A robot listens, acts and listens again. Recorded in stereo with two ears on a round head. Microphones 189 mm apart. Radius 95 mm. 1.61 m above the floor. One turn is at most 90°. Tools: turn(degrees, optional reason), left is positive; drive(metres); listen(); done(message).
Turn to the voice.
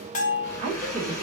turn(degrees=-30, reason="The woman speaking: about 30° right or 150° right.")
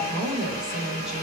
done("Found it: a woman speaking, straight ahead, 1 to 2 m away.")